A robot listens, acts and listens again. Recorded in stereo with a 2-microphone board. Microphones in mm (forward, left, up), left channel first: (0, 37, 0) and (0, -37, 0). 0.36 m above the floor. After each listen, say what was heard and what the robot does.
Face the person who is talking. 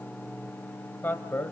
The man speaking: about 25° left or 155° left. Turn 25° left.
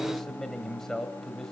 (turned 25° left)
So it is at 10° left. Turn 10° left.
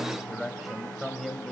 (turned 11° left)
Facing the man speaking.